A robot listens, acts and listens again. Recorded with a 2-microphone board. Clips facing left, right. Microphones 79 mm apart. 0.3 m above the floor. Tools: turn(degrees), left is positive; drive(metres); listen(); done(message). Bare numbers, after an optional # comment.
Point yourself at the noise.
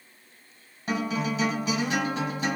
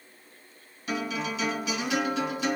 # The guitar: about 40° left or 140° left.
turn(40)
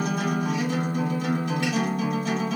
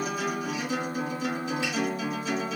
# So it is at 90° left.
turn(90)
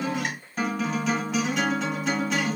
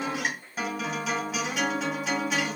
# The guitar is now 10° right.
turn(-10)
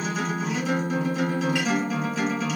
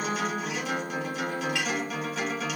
done("Facing the guitar, 2 to 4 m away.")